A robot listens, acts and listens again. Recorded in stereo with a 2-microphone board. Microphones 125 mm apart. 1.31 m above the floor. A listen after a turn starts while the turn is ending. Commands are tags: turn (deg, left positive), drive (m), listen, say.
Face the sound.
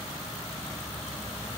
<listen/>
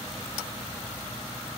<listen/>
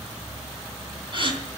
<turn deg="-45"/>
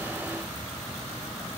<listen/>
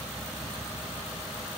<say>I heard a gasp, but can't make it out now. It was about straight ahead or 90° right.</say>